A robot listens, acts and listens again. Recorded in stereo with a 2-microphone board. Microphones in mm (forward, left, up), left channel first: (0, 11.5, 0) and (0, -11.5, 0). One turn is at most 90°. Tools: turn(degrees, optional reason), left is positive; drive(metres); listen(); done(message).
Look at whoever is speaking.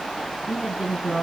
turn(degrees=-35, reason="The woman speaking: about 35° right or 145° right.")
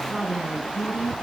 turn(degrees=-90, reason="So it is at 100° right.")
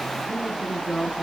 turn(degrees=10, reason="The woman speaking is now 10° left.")
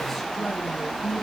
listen()
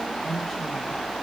turn(degrees=10, reason="The woman speaking is now 10° left.")
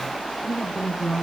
done("Facing the woman speaking.")